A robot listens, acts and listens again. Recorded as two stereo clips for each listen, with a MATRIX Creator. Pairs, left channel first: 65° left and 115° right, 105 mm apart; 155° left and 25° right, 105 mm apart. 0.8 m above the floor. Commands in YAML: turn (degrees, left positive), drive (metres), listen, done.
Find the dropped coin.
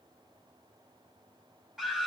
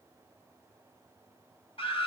listen: true
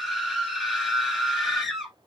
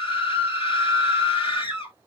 listen: true
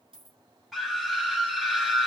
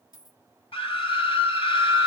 turn: -155
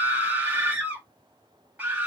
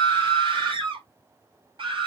done: "Facing where the dropped coin came from. I can't hear it now."